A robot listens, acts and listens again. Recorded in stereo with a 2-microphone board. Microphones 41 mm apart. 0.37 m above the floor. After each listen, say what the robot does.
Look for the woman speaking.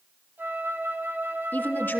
Turn 60° left.
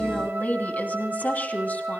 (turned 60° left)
Turn 45° left.
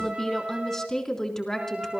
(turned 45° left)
Turn 15° left.
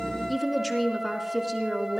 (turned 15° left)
Found it: a woman speaking, straight ahead, 2 to 4 m away.